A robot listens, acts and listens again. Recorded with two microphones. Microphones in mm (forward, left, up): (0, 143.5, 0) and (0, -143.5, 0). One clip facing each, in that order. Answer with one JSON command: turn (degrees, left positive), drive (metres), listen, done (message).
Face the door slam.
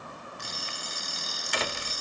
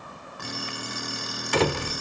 {"turn": -70}
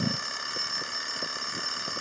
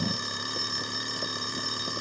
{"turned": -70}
{"listen": true}
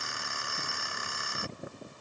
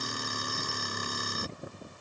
{"done": "I heard a door slam, but can't make it out now. It was about straight ahead or 40° right."}